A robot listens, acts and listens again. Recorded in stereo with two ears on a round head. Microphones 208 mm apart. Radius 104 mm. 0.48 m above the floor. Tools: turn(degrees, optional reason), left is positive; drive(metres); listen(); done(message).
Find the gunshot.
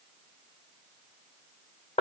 listen()
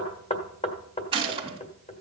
turn(degrees=-25, reason="The gunshot: about 25° right or 155° right.")
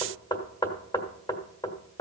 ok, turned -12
listen()
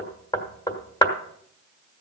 done("I heard a gunshot, but can't make it out now. It was about 10° right or 145° right.")